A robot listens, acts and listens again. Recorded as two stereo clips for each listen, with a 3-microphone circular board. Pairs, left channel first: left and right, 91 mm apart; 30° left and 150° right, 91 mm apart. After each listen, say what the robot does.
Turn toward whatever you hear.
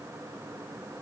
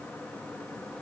Keep listening.
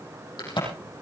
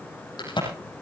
Turn 60° left.
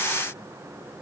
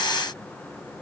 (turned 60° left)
Facing where the crack came from. I can't hear it now.